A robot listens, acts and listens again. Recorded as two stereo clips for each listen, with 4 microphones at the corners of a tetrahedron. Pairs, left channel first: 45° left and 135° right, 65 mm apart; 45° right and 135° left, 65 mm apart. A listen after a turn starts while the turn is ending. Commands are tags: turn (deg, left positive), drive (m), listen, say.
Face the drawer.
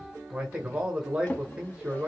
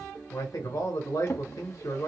<turn deg="-10"/>
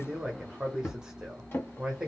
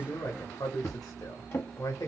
<say>Found it: a drawer, straight ahead.</say>